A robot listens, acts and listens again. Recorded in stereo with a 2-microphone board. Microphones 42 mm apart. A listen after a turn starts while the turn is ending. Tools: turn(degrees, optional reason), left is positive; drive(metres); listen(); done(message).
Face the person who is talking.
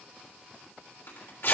listen()
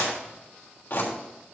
listen()
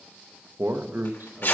turn(degrees=-60, reason="The man speaking: about 60° right or 120° right.")
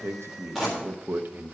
turn(degrees=-60, reason="So it is at 60° right.")
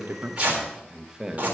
turn(degrees=-15, reason="The man speaking is now 15° right.")
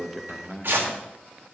done("Facing the man speaking.")